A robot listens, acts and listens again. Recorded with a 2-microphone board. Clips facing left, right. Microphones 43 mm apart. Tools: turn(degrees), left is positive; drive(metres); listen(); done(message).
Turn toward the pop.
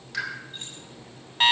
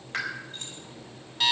turn(degrees=-35)
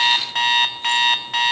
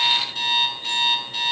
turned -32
listen()
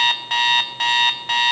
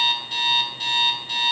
done("I heard a pop, but can't make it out now. It was about 5° right or 110° right.")